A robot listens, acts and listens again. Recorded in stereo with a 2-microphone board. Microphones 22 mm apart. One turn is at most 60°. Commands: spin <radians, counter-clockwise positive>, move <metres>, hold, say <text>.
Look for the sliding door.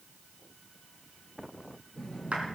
spin 0.61
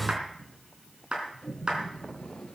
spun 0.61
spin 1.05
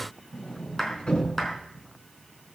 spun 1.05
spin 0.87
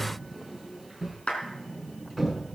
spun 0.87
say Facing the sliding door, over 4 m away.